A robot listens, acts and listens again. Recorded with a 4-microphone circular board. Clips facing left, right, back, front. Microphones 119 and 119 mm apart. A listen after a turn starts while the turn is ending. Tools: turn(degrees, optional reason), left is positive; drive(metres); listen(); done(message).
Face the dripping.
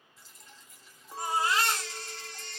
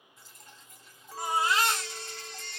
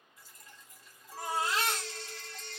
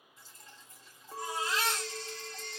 turn(degrees=-60, reason="The dripping: 60° right.")
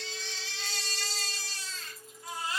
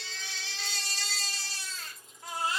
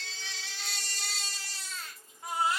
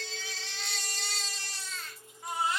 listen()
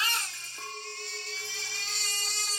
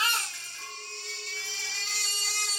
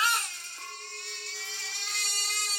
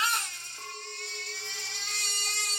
listen()
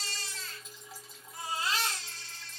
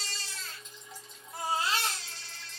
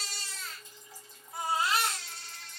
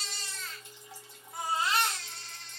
done("Found it: dripping, straight ahead, 1 to 2 m away.")